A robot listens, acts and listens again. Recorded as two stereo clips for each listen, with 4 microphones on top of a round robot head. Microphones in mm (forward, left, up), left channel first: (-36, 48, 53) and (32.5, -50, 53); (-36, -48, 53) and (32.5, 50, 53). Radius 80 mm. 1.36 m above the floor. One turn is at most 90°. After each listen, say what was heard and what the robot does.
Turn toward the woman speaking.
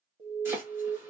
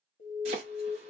Keep listening.
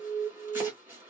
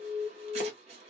Keep listening.
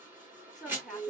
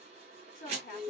The woman speaking: 145° right. Turn 90° right.
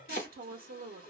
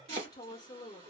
The woman speaking is now 65° right. Turn 65° right.
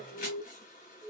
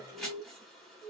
Keep listening.
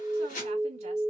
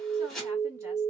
The woman speaking is now 15° right. Turn 15° right.
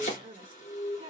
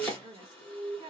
Facing the woman speaking, under 1 m away.